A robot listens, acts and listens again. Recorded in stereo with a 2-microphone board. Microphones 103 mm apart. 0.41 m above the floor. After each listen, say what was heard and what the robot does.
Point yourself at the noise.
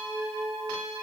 Keep listening.
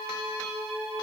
Keep listening.
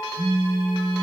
The phone buzzing: about 50° left or 130° left. Turn 50° left.
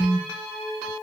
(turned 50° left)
Found it: a phone buzzing, straight ahead, 2 to 4 m away.